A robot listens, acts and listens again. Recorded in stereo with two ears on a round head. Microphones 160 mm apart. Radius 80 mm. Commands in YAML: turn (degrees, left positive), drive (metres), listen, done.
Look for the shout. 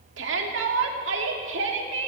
turn: -90
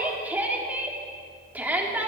turn: -10
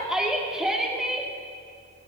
done: "Facing the shout."